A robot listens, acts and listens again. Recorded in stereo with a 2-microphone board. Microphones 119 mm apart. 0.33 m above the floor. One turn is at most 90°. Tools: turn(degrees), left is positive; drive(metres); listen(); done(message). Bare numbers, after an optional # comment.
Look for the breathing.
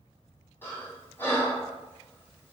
# The breathing: about 20° left or 160° left.
turn(20)
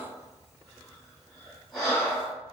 done("Facing the breathing, 1 to 2 m away.")